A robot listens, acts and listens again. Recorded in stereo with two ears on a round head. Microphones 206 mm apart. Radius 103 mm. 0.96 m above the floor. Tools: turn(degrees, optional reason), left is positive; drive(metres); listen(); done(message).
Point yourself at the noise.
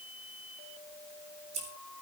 turn(degrees=-30, reason="The scissors: about 30° right or 150° right.")
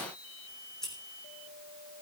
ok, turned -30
done("Facing the scissors.")